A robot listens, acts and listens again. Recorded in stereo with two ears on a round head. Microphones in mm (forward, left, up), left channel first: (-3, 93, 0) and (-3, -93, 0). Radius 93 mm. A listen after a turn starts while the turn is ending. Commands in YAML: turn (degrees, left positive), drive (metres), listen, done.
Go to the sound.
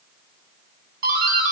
turn: -45
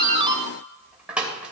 drive: 1.0
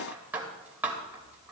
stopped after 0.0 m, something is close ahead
turn: -10
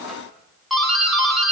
done: "Blocked. The doorbell is further on, straight ahead."